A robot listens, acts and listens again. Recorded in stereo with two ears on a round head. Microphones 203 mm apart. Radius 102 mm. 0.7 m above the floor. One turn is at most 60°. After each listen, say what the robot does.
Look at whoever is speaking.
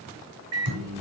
Keep listening.
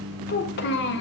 Turn 50° left.
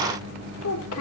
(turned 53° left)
Turn 60° left.
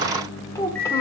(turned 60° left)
Turn 15° left.
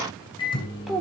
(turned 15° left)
Facing the child speaking.